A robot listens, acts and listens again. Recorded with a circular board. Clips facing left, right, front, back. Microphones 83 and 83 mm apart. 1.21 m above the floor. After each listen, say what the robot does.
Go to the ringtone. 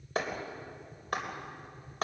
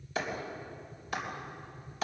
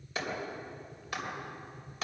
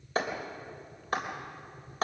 Keep listening.
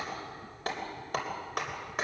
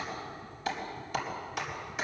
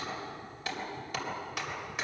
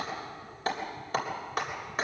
Keep listening.
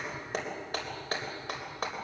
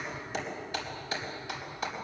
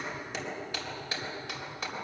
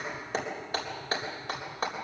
I can't make out a ringtone to turn to.